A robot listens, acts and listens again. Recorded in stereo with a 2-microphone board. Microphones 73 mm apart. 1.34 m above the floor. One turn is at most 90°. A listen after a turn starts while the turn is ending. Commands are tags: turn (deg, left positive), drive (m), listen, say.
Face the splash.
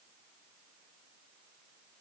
<listen/>
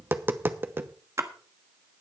<turn deg="-40"/>
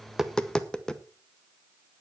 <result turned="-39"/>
<listen/>
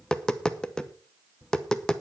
<say>I heard a splash, but can't make it out now. It was about straight ahead or 100° right.</say>